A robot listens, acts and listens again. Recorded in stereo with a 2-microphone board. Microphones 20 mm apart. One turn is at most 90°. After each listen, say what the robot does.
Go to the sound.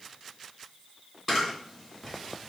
Turn 30° right.
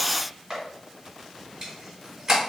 Turn 90° right.
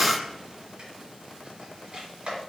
Turn 90° right.
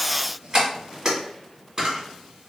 Turn 40° right.
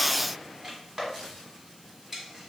Turn 15° right.
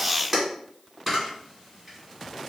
Drive 1.0 m forward.
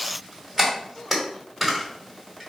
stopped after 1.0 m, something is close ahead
Arrived at the camera shutter, straight ahead.